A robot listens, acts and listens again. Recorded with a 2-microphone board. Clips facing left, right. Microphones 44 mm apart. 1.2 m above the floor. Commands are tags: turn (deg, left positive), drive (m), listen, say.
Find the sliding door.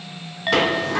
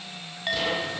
<turn deg="90"/>
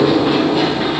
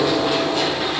<turn deg="10"/>
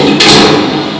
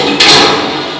<say>Facing the sliding door.</say>